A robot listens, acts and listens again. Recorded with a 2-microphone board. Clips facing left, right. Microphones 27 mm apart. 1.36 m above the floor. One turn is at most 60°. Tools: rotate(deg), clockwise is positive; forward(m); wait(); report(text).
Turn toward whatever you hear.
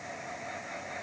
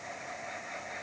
wait()
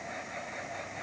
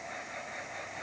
wait()
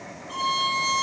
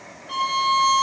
rotate(60)
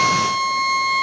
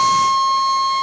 rotate(40)
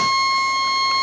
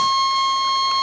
report("Found it: a violin, straight ahead.")